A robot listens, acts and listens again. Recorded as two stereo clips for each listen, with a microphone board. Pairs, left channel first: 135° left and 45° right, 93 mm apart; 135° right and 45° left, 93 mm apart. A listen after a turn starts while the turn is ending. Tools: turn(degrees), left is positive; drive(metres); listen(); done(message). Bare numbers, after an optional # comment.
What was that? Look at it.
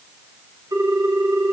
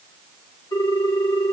# The ringtone: 90° right.
turn(-90)
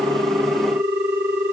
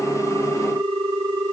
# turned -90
# The ringtone is now 20° left.
turn(20)
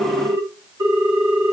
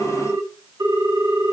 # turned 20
done("Facing the ringtone.")